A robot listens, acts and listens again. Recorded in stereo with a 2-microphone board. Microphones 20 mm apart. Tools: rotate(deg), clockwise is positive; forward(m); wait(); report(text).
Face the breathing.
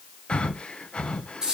rotate(-55)
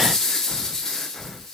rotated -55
rotate(-10)
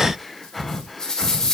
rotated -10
report("Facing the breathing.")